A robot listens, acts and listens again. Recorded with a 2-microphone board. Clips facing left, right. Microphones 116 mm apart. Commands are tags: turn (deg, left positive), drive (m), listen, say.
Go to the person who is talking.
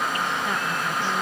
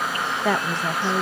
<turn deg="-90"/>
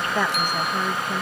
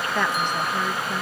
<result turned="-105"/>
<turn deg="10"/>
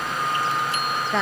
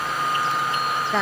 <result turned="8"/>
<drive m="1.0"/>
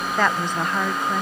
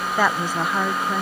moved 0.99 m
<drive m="1.0"/>
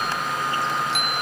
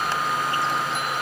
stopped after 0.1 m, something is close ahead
<listen/>
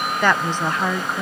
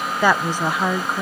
<turn deg="-10"/>
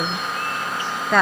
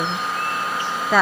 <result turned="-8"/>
<say>I am next to the woman speaking.</say>